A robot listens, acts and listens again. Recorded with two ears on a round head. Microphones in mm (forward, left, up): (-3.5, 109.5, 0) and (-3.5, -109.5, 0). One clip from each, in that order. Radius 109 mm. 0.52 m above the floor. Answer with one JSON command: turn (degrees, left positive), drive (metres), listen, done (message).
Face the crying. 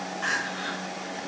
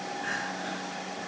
{"turn": 40}
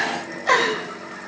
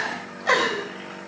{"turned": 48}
{"done": "Facing the crying, 2 to 4 m away."}